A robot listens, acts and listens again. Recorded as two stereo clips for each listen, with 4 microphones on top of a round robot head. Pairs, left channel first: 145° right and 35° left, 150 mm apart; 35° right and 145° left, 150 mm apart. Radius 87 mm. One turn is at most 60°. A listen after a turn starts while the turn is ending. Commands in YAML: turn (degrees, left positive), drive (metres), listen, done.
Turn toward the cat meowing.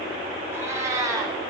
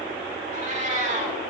turn: 60
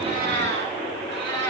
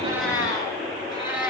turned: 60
turn: 25
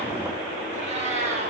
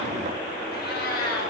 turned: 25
turn: -15
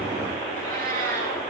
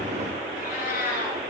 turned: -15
done: "Found it: a cat meowing, straight ahead, over 4 m away."